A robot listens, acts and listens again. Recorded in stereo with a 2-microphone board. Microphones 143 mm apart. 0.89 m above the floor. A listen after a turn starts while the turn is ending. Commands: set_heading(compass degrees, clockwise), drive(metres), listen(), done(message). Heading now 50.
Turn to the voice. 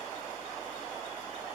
listen()
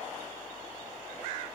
listen()
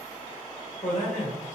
set_heading(345)
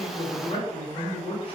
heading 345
set_heading(300)
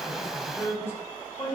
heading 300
set_heading(280)
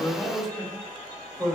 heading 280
done("Facing the man speaking.")